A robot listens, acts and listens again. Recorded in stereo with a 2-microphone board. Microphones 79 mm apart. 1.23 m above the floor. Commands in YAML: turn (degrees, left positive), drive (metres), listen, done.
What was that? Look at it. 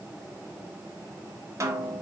turn: -40
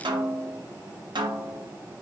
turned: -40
turn: -100
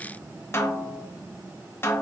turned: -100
turn: 30
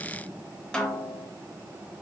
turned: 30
turn: 10
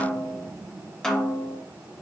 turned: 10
done: "Facing the snare drum, under 1 m away."